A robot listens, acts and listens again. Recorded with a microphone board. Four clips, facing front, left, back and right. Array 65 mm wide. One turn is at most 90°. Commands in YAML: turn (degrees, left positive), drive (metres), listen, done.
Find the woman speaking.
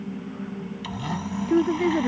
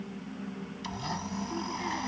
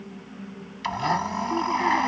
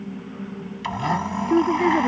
turn: -65
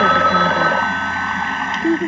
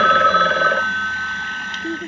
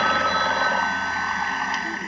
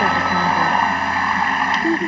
turn: -20
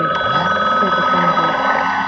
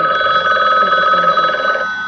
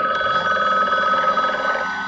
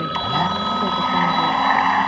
listen: true
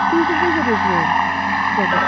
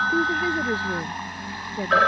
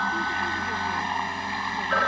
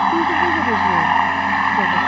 listen: true
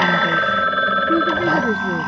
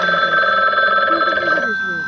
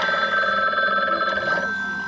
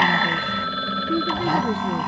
done: "I heard a woman speaking from this way, but can't make it out now."